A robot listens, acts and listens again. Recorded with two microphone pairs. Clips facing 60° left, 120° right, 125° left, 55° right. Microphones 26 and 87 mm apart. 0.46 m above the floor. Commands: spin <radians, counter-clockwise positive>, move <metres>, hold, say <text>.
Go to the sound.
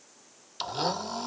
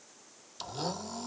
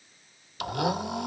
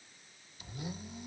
spin 2.01
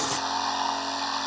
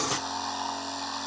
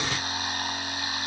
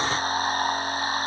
move 1.0
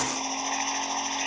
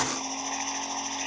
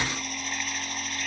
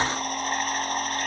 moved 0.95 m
spin -0.26
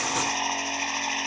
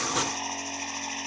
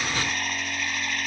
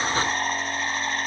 move 1.0
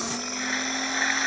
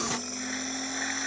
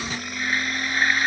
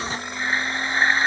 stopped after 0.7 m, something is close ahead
say Arrived at the blender, straight ahead.